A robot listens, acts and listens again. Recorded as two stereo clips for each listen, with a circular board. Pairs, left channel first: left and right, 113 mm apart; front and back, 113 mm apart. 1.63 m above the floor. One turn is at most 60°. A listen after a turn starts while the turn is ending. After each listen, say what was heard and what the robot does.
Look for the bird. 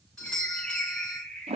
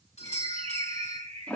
The bird: 170° left. Turn 60° left.
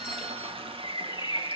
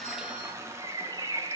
The bird is now 135° left. Turn 60° left.
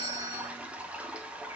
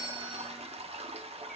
Nothing new. It was at 75° left. Turn 60° left.
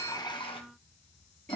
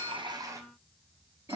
Nothing new. It was at 15° left. Turn 15° left.
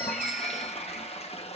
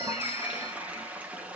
Facing where the bird came from. I can't hear it now.